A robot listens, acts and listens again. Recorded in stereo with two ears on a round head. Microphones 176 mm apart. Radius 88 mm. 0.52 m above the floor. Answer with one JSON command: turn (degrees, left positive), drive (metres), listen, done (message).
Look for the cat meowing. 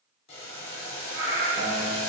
{"turn": -90}
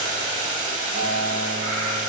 {"listen": true}
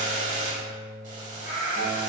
{"turn": -45}
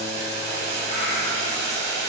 {"listen": true}
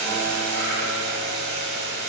{"listen": true}
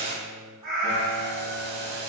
{"turn": -20}
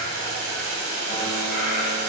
{"listen": true}
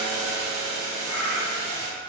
{"done": "Facing the cat meowing."}